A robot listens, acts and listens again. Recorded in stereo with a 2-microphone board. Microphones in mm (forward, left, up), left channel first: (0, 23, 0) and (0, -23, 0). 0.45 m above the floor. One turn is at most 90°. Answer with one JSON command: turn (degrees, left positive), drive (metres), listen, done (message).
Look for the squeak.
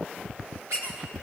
{"turn": -90}
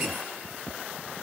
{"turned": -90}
{"listen": true}
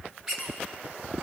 {"turn": -10}
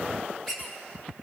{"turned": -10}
{"done": "Facing the squeak."}